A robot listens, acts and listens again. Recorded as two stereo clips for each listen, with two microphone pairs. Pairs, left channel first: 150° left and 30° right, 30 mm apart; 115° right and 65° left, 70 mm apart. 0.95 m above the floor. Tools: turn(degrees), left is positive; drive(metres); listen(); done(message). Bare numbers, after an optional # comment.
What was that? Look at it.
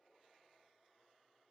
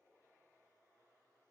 listen()
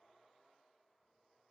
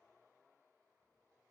listen()
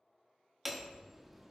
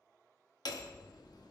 # The hammering: 115° right.
turn(-115)
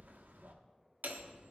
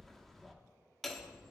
# The hammering is now 30° right.
turn(-30)
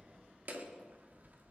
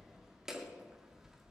# The hammering is now 20° right.
turn(-20)
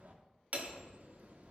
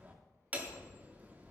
done("Facing the hammering, 1 to 2 m away.")